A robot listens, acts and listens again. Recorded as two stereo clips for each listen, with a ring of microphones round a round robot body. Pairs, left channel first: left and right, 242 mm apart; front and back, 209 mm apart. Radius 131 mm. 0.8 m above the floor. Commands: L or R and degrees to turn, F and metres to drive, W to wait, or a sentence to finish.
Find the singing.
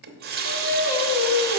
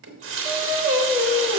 L95
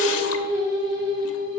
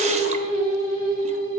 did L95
R20
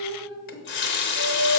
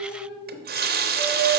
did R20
R15
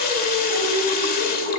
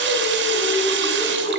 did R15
R10
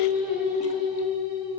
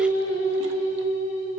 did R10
Found it: singing, straight ahead.